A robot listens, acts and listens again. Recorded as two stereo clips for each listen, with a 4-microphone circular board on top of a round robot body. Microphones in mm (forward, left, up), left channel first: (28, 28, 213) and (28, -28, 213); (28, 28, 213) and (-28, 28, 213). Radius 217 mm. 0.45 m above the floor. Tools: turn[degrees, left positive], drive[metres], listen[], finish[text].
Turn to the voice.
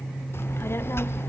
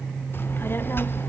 Thought: The child speaking: 50° left.
Action: turn[50]
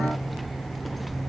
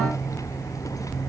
Action: finish[Found it: a child speaking, straight ahead, 1 to 2 m away.]